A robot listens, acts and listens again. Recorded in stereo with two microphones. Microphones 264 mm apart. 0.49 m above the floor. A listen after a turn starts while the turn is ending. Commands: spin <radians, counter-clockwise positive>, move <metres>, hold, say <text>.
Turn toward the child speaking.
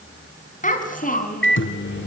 spin 0.52
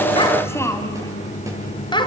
spin 0.35
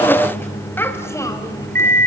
spin 0.17
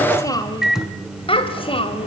spin 0.35
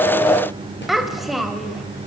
say Found it: a child speaking, straight ahead, 1 to 2 m away.